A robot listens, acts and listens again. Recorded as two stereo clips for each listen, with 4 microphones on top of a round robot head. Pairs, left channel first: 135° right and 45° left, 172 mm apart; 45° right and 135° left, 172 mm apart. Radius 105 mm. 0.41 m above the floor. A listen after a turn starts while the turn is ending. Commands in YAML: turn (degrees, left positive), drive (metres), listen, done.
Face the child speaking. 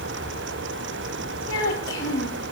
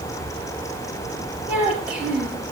turn: -140
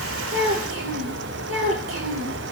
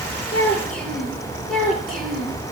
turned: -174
turn: 40
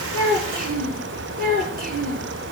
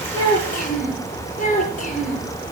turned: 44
done: "Found it: a child speaking, straight ahead."